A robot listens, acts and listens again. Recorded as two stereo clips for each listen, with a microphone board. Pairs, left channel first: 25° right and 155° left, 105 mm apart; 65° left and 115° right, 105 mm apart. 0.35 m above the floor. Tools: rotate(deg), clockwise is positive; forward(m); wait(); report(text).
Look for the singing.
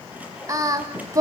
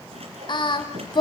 rotate(-105)
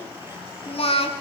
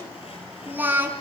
rotate(40)
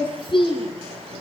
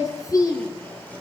rotate(-15)
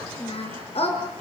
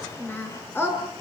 report("Found it: singing, straight ahead.")